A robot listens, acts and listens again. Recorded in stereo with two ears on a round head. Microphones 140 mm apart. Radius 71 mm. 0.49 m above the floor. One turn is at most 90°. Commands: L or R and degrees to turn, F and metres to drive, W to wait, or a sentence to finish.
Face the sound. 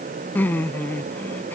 L30
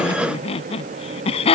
L90
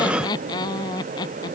L25
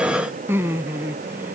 R15
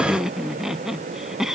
Facing the laughter.